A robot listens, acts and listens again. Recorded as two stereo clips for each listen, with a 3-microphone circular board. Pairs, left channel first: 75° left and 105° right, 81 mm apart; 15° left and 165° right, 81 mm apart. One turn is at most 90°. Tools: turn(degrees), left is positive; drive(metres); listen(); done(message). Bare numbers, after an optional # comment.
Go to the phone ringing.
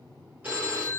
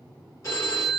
# The phone ringing: 35° right.
turn(-35)
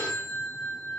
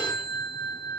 drive(1.0)
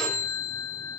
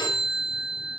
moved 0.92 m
drive(1.0)
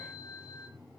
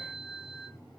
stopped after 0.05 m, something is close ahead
done("I am next to the phone ringing.")